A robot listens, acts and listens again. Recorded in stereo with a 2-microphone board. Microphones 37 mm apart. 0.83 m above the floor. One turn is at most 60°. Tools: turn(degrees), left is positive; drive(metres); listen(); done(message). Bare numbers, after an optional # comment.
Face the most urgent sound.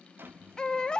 # The baby crying: about 20° left or 160° left.
turn(20)
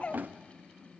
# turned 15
# So it is at 145° left.
turn(60)
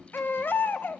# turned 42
# The baby crying is now 100° left.
turn(60)
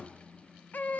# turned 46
# The baby crying is now 55° left.
turn(55)
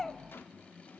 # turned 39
# The baby crying is now 15° left.
turn(15)
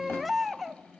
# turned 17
done("Found it: a baby crying, straight ahead.")